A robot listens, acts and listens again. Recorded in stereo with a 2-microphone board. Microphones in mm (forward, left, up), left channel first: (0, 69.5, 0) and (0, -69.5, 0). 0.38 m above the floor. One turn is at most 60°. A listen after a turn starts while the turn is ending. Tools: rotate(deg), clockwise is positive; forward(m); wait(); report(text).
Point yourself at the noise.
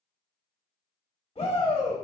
rotate(-50)
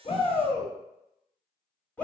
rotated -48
rotate(-15)
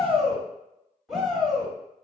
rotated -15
report("Found it: a shout, straight ahead.")